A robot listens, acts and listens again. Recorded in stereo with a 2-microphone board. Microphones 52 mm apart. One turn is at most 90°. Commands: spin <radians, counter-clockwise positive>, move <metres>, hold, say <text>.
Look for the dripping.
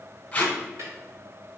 hold
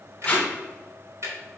hold
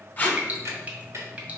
spin -0.44
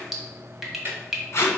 say Facing the dripping, 1 to 2 m away.